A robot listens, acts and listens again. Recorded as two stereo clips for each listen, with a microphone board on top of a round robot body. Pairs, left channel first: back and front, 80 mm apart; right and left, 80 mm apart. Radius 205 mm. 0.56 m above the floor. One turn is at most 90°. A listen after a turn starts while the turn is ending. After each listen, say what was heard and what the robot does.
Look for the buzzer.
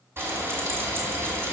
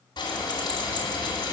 Keep listening.
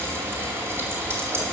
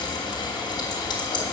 Keep listening.
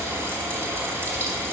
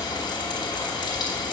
I can't make out a buzzer to turn to.